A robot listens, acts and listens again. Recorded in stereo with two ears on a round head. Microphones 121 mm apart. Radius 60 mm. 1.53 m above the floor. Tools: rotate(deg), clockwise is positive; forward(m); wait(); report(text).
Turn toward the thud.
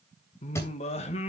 rotate(-20)
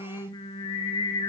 wait()
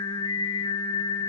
report("I heard a thud, but can't make it out now. It was about straight ahead or 140° left.")